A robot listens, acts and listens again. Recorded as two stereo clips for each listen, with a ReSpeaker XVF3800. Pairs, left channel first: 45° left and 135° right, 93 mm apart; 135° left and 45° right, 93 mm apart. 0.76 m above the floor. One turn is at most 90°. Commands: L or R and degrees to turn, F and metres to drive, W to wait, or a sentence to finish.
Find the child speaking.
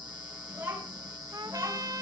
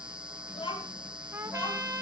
L90
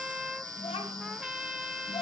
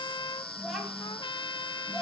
L45
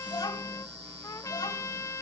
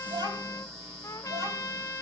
Found it: a child speaking, straight ahead.